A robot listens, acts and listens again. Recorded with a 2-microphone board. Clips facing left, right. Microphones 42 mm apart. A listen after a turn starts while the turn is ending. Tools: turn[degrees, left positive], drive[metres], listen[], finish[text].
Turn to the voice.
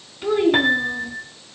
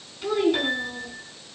Thought: The child speaking: about 15° left or 165° left.
Action: turn[15]
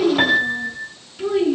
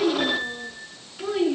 Action: turn[30]
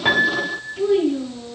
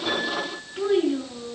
Thought: So it is at 30° right.
Action: turn[-30]
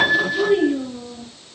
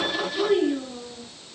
Thought: The child speaking is now 10° right.
Action: turn[-10]
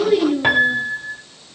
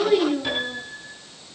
Action: finish[Facing the child speaking, over 4 m away.]